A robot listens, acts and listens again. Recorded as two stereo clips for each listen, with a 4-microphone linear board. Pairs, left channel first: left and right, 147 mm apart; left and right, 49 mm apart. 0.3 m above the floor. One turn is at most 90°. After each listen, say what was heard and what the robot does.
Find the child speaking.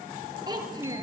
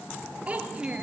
The child speaking: about 25° right or 155° right. Turn 25° right.
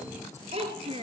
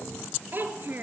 The child speaking: about 40° right or 140° right. Turn 40° right.
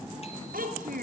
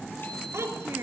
So it is at 110° right. Turn 90° right.
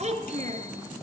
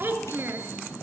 The child speaking is now 50° right. Turn 50° right.
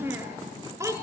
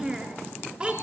The child speaking is now 20° right. Turn 20° right.
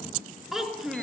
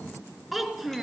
Found it: a child speaking, straight ahead.